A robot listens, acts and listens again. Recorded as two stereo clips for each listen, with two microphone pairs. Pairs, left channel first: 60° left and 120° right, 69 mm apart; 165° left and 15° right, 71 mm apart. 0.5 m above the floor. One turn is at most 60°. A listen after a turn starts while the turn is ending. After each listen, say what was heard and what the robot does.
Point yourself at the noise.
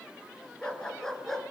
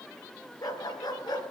The dog barking: 145° left. Turn 60° left.
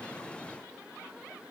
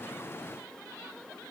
Nothing new. It was at 85° left. Turn 60° left.
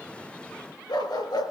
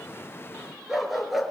The dog barking is now 75° left. Turn 60° left.
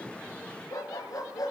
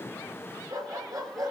The dog barking is now 25° left. Turn 25° left.
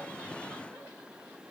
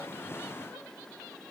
Keep listening.
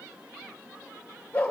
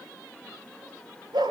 The dog barking is now 10° right. Turn 10° right.
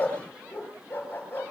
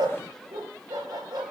Found it: a dog barking, straight ahead, over 4 m away.